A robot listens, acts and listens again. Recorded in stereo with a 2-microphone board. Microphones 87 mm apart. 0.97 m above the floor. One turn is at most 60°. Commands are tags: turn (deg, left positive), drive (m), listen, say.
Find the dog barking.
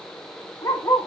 <turn deg="35"/>
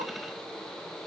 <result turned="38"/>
<listen/>
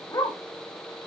<turn deg="40"/>
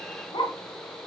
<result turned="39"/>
<turn deg="60"/>
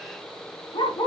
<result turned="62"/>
<turn deg="60"/>
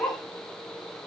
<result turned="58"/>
<turn deg="15"/>
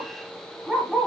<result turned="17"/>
<say>Facing the dog barking, 2 to 4 m away.</say>